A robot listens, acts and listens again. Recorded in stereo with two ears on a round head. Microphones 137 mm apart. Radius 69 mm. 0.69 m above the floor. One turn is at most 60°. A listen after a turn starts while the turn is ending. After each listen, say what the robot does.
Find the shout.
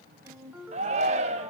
Turn 45° right.
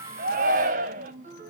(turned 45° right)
Turn 60° right.
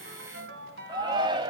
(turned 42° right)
Turn 35° right.
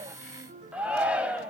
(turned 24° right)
Turn 10° right.
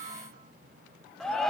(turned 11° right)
Facing the shout.